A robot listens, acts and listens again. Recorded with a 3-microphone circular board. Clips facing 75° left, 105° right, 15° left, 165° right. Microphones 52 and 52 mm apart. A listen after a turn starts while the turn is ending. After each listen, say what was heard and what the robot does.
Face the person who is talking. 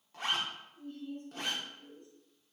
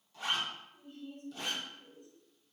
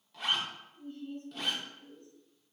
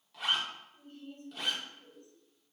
The woman speaking: 175° left. Turn 175° left.
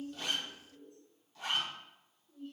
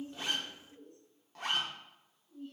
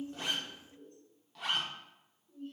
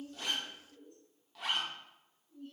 The woman speaking is now 10° right. Turn 10° right.
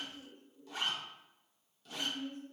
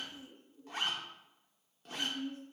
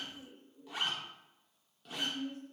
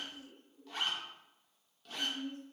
Facing the woman speaking.